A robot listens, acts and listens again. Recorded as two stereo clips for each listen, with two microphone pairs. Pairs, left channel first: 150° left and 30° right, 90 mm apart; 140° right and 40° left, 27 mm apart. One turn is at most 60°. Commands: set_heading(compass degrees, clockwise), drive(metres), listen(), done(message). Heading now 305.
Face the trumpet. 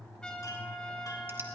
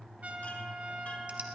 set_heading(245)
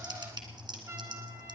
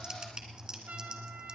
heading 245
set_heading(235)
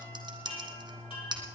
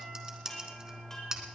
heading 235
listen()
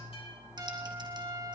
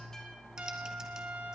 set_heading(215)
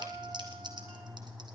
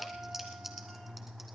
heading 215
done("Found it: a trumpet, straight ahead.")